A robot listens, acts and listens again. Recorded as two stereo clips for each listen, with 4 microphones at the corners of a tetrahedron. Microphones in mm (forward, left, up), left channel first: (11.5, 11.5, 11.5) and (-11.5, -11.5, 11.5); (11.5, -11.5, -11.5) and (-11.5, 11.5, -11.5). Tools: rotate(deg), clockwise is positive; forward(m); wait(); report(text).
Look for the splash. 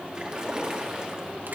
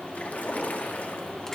rotate(70)
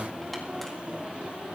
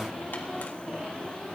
report("Facing where the splash came from. I can't hear it now.")